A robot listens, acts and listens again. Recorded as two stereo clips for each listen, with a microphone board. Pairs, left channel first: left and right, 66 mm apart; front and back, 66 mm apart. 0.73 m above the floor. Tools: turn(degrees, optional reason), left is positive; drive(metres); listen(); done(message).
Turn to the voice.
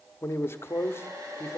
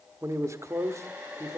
turn(degrees=140, reason="The man speaking: 140° left.")
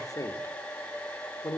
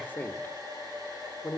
turn(degrees=65, reason="The man speaking is now 65° left.")
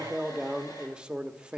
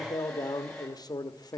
turn(degrees=-10, reason="The man speaking is now 10° right.")
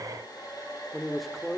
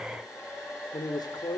done("Found it: a man speaking, straight ahead.")